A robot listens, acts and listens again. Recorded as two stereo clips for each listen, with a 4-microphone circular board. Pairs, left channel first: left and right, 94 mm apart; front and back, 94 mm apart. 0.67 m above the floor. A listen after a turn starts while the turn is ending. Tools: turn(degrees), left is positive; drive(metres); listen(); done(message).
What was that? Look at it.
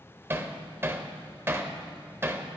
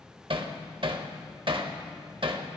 turn(degrees=-155)
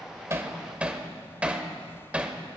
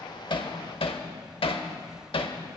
turn(degrees=-15)
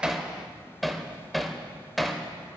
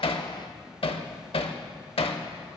done("Facing the hammering.")